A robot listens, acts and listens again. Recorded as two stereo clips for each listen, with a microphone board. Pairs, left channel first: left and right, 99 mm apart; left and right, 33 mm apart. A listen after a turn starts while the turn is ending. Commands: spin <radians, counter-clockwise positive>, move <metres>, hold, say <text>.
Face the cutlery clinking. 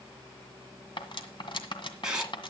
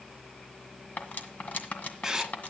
spin 0.96
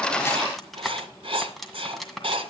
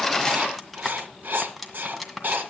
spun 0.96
say Found it: cutlery clinking, straight ahead, 1 to 2 m away.